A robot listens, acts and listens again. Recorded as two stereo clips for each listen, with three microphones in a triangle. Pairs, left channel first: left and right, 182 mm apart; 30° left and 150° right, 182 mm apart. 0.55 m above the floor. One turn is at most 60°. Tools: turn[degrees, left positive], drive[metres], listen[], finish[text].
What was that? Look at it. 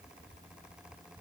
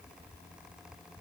Action: listen[]
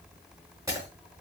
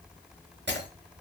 Thought: The breaking glass: 160° right.
Action: turn[-60]
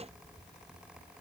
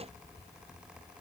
Thought: Nothing new. It was at 100° right.
Action: turn[-60]
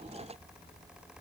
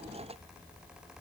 Thought: Nothing new. It was at 40° right.
Action: turn[-40]
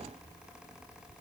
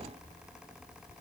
Action: finish[I heard breaking glass from this way, but can't make it out now.]